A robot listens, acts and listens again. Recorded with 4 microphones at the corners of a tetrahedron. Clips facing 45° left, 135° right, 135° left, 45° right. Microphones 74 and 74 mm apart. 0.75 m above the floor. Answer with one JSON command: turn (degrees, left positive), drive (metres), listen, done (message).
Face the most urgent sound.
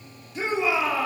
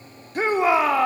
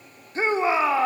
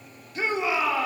{"turn": -170}
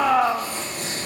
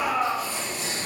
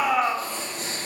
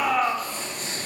{"turn": 50}
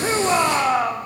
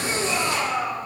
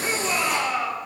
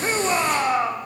{"turn": 15}
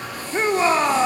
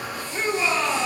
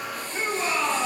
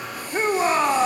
{"done": "Facing the shout."}